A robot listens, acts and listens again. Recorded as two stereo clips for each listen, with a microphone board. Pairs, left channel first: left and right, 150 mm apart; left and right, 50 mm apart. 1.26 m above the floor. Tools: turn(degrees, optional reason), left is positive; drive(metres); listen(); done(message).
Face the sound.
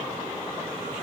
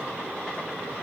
listen()
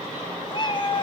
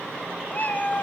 turn(degrees=30, reason="The cat meowing: about 30° left or 150° left.")
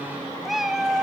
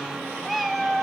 done("Facing the cat meowing, 2 to 4 m away.")